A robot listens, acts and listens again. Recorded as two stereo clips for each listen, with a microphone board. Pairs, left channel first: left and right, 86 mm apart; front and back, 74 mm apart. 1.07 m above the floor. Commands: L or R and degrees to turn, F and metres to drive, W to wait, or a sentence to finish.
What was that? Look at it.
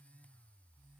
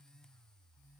W
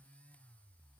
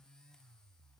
W
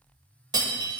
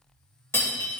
R55
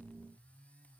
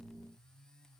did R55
I heard breaking glass from this way, but can't make it out now.